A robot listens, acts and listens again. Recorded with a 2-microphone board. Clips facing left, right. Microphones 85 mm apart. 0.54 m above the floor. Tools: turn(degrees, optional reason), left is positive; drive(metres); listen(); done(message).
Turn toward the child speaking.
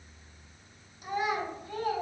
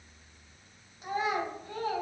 turn(degrees=-35, reason="The child speaking: about 35° right or 145° right.")
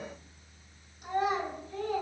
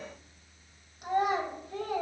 turn(degrees=-110, reason="So it is at 110° right.")
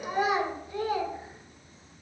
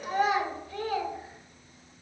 turn(degrees=20, reason="The child speaking is now 20° left.")
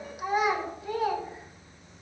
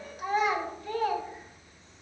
turn(degrees=10, reason="The child speaking is now 10° left.")
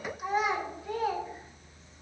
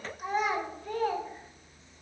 done("Facing the child speaking.")